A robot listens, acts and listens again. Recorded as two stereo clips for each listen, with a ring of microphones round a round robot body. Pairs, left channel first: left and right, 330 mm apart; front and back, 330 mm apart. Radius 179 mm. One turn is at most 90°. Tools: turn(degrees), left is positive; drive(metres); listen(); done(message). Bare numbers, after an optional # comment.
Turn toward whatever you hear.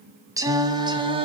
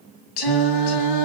# The singing: 15° right.
turn(-15)
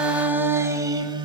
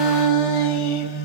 # The singing is now 15° right.
turn(-15)
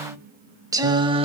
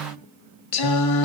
# The singing is now 20° right.
turn(-20)
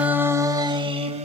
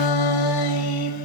# The singing is now 20° right.
turn(-20)
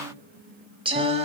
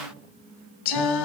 # The singing is now 20° right.
turn(-20)
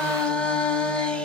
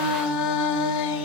done("Facing the singing.")